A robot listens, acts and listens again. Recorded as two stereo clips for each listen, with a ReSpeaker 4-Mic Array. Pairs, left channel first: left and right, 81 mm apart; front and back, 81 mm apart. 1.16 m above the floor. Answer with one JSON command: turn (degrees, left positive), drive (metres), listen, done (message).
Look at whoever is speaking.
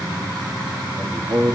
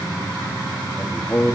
{"turn": -85}
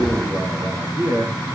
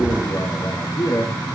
{"turn": -35}
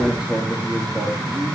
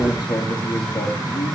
{"turn": -15}
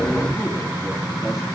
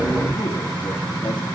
{"listen": true}
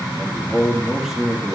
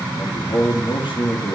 {"done": "Found it: a man speaking, straight ahead."}